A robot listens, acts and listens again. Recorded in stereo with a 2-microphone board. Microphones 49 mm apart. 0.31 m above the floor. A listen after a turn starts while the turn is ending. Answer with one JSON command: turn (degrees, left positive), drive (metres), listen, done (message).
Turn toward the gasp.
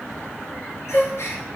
{"turn": 70}
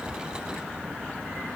{"listen": true}
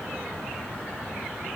{"done": "I heard a gasp, but can't make it out now. It was about straight ahead or 40° left."}